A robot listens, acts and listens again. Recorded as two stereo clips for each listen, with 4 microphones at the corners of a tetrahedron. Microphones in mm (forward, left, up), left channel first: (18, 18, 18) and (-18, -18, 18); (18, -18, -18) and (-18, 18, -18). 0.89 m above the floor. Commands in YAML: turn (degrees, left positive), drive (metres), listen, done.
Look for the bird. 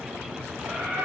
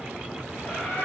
turn: -110
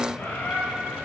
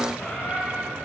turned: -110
done: "Facing the bird."